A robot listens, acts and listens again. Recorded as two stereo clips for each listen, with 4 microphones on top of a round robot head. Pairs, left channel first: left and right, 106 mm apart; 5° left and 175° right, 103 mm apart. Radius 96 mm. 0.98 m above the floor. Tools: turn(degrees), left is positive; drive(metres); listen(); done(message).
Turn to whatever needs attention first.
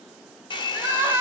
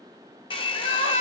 turn(degrees=-20)
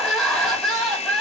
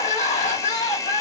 done("Facing the crying.")